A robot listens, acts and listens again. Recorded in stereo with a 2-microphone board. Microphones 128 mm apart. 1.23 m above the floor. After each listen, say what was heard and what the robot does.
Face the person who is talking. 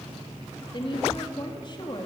The woman speaking: about 40° left or 140° left. Turn 40° left.
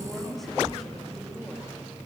Facing the woman speaking.